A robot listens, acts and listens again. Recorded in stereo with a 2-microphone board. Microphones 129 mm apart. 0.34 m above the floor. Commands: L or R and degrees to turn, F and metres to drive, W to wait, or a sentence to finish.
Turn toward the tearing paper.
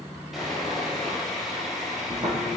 R60
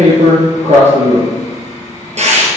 R60
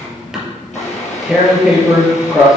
Facing the tearing paper.